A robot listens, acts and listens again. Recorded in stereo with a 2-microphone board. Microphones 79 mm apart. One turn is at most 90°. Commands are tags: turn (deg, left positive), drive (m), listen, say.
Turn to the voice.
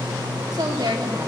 <turn deg="-65"/>
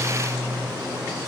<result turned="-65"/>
<listen/>
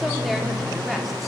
<listen/>
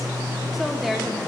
<say>Found it: a woman speaking, straight ahead.</say>